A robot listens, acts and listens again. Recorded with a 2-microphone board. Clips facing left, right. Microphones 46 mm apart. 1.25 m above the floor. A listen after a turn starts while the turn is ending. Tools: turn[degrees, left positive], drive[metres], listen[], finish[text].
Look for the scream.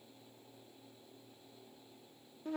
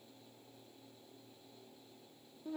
Action: listen[]
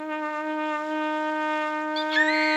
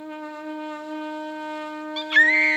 Thought: The scream: about 45° right or 135° right.
Action: turn[-45]
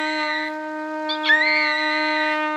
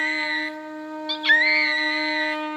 Action: finish[Found it: a scream, straight ahead.]